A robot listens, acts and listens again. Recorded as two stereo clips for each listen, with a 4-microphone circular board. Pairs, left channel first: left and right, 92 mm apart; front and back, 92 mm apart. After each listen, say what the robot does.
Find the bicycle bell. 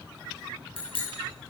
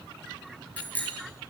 Turn 75° left.
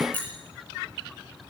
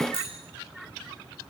Turn 20° left.
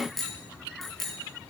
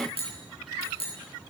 Found it: a bicycle bell, straight ahead, over 4 m away.